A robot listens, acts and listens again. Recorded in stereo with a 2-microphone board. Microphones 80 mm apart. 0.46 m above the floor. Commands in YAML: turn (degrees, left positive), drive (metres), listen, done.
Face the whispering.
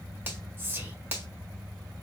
turn: -30
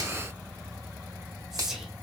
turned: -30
done: "Facing the whispering, 1 to 2 m away."